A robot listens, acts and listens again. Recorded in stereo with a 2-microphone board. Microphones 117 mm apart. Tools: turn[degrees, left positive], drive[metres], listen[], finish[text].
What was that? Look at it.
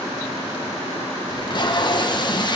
Thought: The tape being pulled: about 40° left or 140° left.
Action: turn[40]
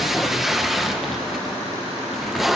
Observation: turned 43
Action: finish[Found it: tape being pulled, straight ahead.]